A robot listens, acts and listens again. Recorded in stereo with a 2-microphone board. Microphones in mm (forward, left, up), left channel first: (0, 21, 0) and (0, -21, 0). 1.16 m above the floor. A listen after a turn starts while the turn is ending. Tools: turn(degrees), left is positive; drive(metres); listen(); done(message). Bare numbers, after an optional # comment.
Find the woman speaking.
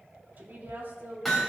# The woman speaking: about 50° right or 130° right.
turn(-50)
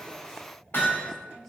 listen()
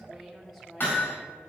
done("Facing the woman speaking.")